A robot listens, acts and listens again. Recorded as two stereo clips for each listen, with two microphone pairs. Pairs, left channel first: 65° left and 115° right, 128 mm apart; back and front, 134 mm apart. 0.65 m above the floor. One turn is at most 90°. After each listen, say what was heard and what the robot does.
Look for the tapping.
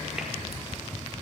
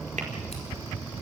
Keep listening.
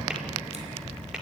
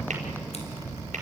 The tapping: 30° right. Turn 30° right.
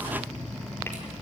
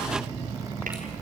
Keep listening.
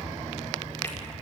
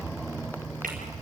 Keep listening.
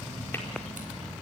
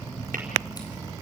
I heard tapping from this way, but can't make it out now.